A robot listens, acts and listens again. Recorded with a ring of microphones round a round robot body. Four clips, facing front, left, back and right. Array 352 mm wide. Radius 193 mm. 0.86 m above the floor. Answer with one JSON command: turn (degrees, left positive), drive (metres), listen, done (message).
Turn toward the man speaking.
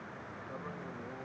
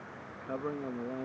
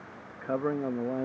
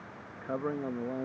{"turn": -170}
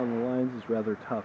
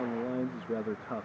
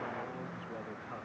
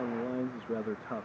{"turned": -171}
{"done": "Facing the man speaking."}